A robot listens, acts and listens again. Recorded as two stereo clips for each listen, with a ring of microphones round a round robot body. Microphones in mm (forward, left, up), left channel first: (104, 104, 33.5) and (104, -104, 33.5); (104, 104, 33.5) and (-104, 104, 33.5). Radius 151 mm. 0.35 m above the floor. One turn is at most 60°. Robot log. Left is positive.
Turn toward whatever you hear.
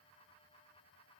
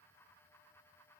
cmd idle
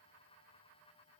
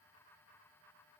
cmd idle
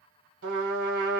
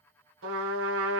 note: The trumpet: 140° right.
cmd yaw -60
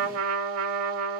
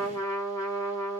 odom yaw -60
note: The trumpet is now 80° right.
cmd yaw -60
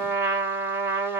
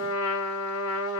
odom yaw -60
note: The trumpet is now 10° right.
cmd yaw -10
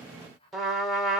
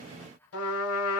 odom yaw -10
end: Found it: a trumpet, straight ahead.